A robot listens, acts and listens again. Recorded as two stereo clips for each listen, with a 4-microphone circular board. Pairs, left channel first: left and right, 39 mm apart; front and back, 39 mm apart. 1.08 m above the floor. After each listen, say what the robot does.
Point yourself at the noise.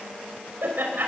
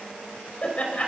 Turn 55° right.
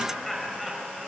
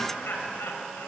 Facing the laughter.